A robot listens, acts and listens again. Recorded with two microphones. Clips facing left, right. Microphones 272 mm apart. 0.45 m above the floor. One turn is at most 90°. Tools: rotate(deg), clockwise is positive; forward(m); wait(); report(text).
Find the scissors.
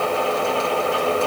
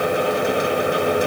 wait()
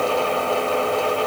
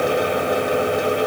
wait()
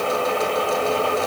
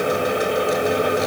report("I can't make out scissors to turn to.")